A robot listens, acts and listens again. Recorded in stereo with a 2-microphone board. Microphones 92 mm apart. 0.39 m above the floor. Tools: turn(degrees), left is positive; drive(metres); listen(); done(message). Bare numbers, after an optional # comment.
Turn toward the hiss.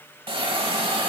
# The hiss: about 70° right or 110° right.
turn(-70)
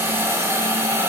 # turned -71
# So it is at 30° right.
turn(-30)
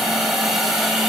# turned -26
done("Facing the hiss.")